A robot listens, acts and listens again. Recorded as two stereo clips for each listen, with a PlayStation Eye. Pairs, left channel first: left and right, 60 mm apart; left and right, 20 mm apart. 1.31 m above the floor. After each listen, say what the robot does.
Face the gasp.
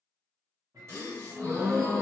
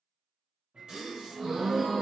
Turn 50° right.
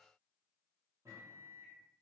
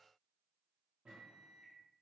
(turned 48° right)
Keep listening.
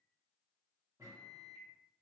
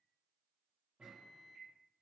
I heard a gasp, but can't make it out now. It was about straight ahead or 80° right.